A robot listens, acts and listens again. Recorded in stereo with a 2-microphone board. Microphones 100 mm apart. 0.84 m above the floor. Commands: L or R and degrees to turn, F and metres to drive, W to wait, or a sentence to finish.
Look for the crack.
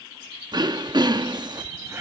R30
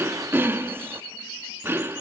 W
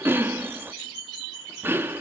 I heard a crack, but can't make it out now. It was about straight ahead or 120° right.